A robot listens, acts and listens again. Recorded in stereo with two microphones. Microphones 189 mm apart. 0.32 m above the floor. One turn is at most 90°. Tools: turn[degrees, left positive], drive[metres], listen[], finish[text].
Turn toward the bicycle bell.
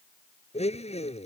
Action: listen[]
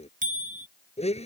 Thought: The bicycle bell: about 45° right or 135° right.
Action: turn[-45]
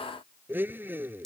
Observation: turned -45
Action: finish[Facing the bicycle bell.]